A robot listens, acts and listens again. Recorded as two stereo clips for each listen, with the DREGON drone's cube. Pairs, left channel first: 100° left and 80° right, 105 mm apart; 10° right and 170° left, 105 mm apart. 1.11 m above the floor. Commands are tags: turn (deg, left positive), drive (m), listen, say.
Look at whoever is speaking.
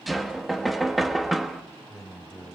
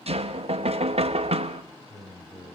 <turn deg="10"/>
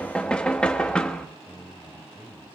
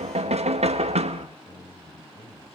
<say>Facing the man speaking.</say>